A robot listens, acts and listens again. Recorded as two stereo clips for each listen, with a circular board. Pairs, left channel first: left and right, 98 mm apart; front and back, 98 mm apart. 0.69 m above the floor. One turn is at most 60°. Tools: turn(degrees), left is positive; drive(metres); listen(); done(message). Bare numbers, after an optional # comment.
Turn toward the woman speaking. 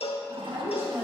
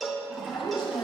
# The woman speaking: 30° right.
turn(-30)
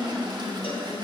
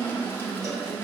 # The woman speaking is now 20° left.
turn(20)
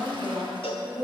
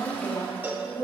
# The woman speaking is now 35° left.
turn(35)
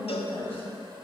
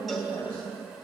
# The woman speaking is now 30° left.
turn(30)
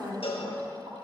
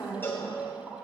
# The woman speaking is now 30° left.
turn(30)
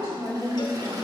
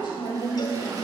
# The woman speaking is now 25° left.
turn(25)
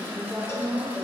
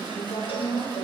done("Facing the woman speaking.")